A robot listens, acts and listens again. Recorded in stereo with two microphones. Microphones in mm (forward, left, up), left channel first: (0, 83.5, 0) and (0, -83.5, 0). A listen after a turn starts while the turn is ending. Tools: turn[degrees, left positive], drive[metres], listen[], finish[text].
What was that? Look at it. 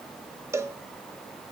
Thought: The cowbell: about 15° right or 165° right.
Action: turn[-15]
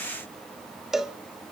Action: finish[Facing the cowbell.]